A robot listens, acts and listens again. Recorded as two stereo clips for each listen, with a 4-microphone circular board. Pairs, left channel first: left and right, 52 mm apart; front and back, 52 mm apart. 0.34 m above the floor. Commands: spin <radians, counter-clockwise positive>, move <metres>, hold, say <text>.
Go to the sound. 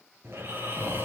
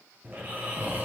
spin -2.27
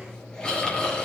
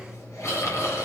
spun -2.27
spin 0.26
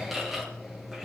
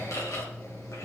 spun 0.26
move 1.0
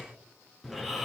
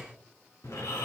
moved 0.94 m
move 1.0
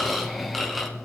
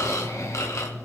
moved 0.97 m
move 1.0
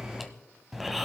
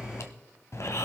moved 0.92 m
move 1.0
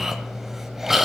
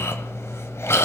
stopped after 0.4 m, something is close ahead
spin -0.17
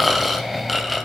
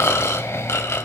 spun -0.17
say I am next to the snoring.